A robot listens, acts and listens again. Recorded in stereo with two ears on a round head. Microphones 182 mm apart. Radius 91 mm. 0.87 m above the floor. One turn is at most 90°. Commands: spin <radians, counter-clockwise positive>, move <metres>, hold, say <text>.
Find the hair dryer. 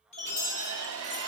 spin -1.57
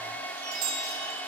spin 0.17
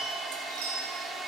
say Facing the hair dryer.